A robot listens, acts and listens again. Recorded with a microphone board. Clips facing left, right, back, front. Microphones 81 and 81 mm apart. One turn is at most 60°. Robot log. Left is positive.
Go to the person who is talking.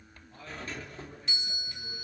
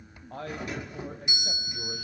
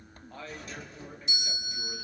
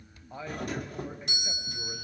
note: The man speaking: 75° right.
cmd yaw -60
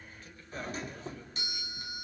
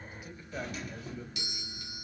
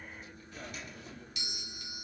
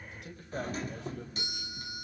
note: Nothing new. It was at 15° right.
cmd yaw -15
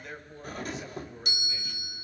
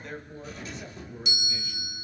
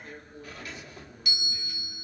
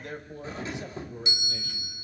cmd fwd 1.0
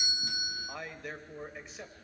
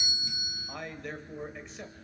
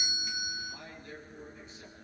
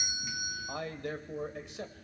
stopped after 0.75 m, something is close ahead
end: Blocked. The man speaking is further on, straight ahead.